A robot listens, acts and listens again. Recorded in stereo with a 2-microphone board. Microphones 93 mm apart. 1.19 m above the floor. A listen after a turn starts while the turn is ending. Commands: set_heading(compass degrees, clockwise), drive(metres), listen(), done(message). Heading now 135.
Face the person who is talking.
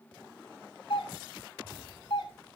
listen()
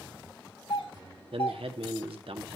set_heading(225)
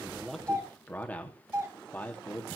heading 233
set_heading(218)
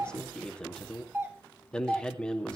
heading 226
set_heading(216)
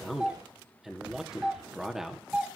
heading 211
done("Found it: a man speaking, straight ahead.")